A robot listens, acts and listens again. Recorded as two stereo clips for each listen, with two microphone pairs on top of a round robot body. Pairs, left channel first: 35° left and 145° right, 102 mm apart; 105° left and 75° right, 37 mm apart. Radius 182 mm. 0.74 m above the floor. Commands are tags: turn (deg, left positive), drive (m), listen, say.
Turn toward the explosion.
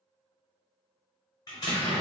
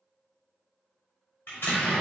<turn deg="85"/>
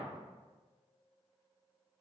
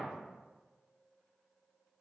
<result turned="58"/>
<turn deg="30"/>
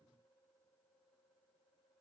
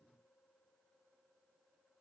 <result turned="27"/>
<say>Facing where the explosion came from. I can't hear it now.</say>